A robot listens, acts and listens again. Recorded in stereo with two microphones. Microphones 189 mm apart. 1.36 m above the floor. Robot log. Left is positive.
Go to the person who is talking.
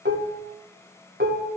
cmd idle
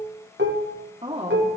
note: The woman speaking: about 35° right or 145° right.
cmd yaw -35
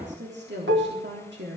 note: So it is at 110° right.
cmd yaw -110
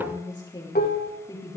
note: The woman speaking is now 20° left.
cmd yaw +20
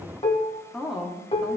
cmd fwd 1.0
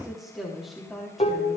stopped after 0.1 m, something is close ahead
end: Something is in my way. I am facing the woman speaking but have not reached it.